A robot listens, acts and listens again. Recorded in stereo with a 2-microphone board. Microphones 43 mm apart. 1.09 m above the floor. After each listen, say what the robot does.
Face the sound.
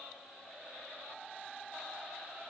Keep listening.
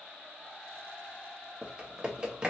Turn 20° right.
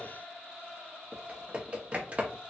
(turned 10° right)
Turn 30° right.
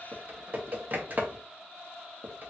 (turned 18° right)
Turn 125° right.
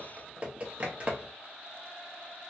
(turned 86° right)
Turn 40° right.
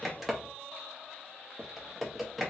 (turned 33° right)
Facing the typing on a keyboard.